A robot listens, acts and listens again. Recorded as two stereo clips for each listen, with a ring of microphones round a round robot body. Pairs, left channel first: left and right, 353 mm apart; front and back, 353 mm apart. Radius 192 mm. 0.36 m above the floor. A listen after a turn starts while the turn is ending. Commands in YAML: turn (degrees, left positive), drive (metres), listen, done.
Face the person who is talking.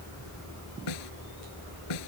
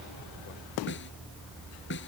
listen: true
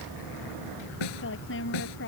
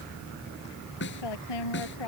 turn: 30
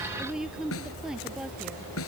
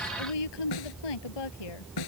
done: "Facing the woman speaking."